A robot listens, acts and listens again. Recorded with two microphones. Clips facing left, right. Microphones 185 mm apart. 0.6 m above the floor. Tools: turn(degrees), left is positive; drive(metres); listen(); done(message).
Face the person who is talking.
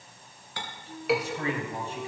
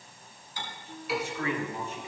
turn(degrees=35)
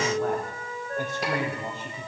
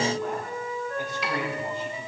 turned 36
turn(degrees=130)
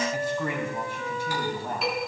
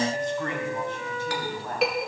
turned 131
turn(degrees=15)
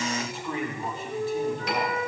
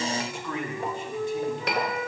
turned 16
done("Found it: a man speaking, straight ahead, over 4 m away.")